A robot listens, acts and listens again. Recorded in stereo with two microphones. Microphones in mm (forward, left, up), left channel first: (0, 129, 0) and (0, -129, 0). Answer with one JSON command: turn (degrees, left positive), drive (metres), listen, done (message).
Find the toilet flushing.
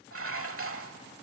{"listen": true}
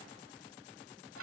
{"listen": true}
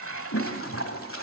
{"turn": 55}
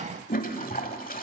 {"turn": 40}
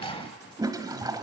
{"turn": -20}
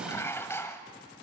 {"listen": true}
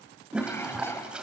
{"done": "Facing the toilet flushing, 1 to 2 m away."}